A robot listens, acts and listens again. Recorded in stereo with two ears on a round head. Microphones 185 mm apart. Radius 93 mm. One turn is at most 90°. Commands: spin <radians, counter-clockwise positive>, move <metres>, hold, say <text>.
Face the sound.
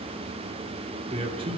spin -0.44
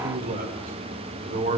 spin -0.70
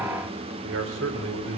spin -1.57
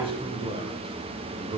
spin -0.44
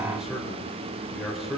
say Found it: a man speaking, straight ahead, 2 to 4 m away.